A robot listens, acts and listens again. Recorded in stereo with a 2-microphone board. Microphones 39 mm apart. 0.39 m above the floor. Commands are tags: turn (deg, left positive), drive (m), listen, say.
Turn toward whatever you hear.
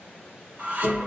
<turn deg="-40"/>
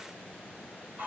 <turn deg="-95"/>
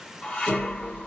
<turn deg="20"/>
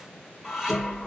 <say>Facing the dishes clattering.</say>